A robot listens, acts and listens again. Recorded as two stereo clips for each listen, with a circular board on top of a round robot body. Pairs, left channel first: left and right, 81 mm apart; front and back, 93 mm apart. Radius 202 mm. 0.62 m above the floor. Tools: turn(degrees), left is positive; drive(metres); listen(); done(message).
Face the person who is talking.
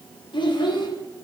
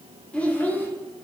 turn(degrees=70)
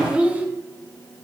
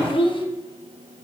turn(degrees=-20)
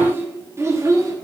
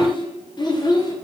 turn(degrees=-40)
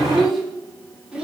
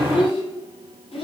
turn(degrees=-10)
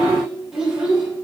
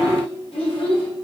turn(degrees=-10)
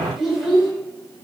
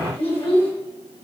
done("Found it: a child speaking, straight ahead.")